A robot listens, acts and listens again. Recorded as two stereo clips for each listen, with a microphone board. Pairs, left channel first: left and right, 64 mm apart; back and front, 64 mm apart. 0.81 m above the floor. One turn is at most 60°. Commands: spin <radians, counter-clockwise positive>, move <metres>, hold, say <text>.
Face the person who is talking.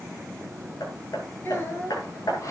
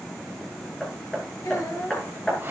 spin 1.05
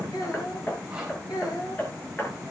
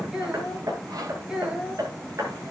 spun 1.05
spin 1.05
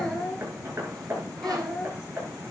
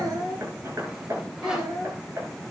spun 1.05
spin 0.17
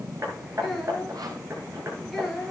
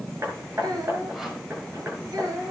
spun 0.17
say Facing the child speaking.